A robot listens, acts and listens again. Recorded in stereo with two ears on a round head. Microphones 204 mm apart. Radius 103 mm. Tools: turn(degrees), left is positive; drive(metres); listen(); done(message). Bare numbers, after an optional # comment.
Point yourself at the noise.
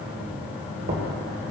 # The knocking: about 60° right or 120° right.
turn(-60)
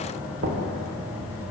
# So it is at 60° right.
turn(-60)
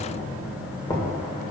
# The knocking is now 15° left.
turn(15)
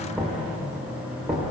done("Facing the knocking, 1 to 2 m away.")